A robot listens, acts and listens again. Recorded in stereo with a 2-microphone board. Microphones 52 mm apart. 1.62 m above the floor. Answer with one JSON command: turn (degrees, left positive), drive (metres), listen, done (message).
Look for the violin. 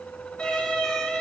{"turn": 20}
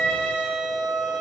{"done": "Facing the violin, 2 to 4 m away."}